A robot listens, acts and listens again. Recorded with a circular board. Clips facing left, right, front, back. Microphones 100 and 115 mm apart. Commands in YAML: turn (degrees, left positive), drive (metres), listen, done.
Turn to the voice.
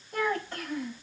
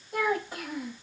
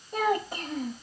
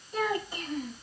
turn: -10
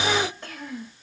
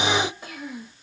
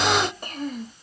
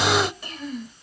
turn: -10
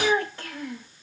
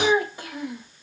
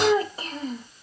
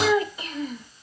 turn: -25
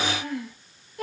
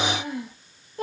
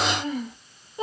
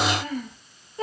turn: -60
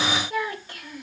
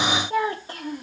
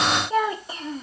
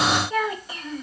turn: -50
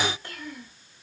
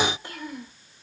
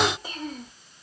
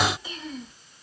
turn: -20
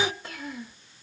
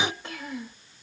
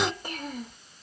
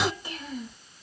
done: "Facing the child speaking."